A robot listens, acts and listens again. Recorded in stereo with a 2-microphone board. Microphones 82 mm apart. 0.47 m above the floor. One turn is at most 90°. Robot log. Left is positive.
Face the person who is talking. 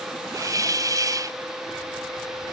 cmd idle
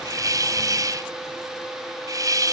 cmd idle
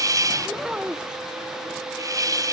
cmd yaw -30
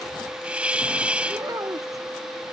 cmd idle
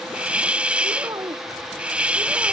note: So it is at 135° right.
cmd yaw -90
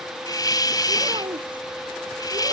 note: The child speaking is now 70° right.
cmd yaw -70
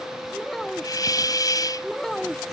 end: Facing the child speaking.